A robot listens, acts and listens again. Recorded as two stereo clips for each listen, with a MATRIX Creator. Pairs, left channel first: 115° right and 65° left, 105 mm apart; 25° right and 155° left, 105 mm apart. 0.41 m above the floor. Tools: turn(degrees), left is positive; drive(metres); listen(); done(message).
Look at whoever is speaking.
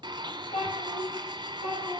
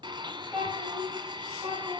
turn(degrees=-120)
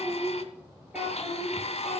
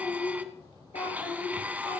turn(degrees=-15)
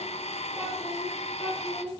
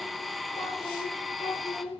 turn(degrees=-10)
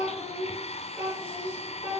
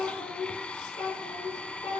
done("Facing the child speaking.")